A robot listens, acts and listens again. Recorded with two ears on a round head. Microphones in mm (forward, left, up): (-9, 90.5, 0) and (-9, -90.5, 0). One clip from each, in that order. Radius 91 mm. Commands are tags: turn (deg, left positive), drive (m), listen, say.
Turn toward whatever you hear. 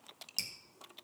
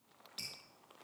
<turn deg="50"/>
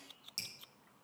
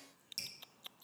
<say>Found it: dripping, straight ahead, 2 to 4 m away.</say>